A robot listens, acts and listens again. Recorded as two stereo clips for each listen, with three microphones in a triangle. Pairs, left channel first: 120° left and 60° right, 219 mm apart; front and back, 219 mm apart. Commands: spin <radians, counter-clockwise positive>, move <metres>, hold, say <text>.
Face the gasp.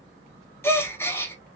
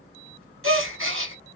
spin -2.79
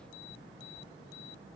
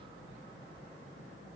say Facing where the gasp came from. I can't hear it now.